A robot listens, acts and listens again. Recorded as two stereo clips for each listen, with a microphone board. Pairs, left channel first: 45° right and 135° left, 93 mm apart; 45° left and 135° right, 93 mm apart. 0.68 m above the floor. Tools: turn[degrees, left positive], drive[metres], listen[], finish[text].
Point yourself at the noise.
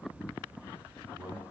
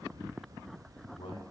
Thought: The man speaking: 65° left.
Action: turn[65]
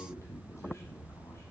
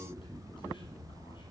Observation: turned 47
Thought: The man speaking is now 15° left.
Action: turn[15]
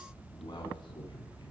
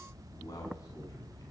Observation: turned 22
Action: finish[Facing the man speaking, over 4 m away.]